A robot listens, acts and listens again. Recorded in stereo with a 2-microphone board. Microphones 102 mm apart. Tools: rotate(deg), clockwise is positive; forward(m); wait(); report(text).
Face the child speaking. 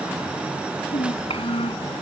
rotate(-65)
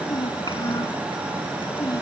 rotate(-45)
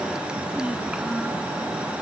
wait()
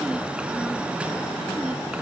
wait()
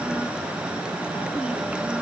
report("Facing where the child speaking came from. I can't hear it now.")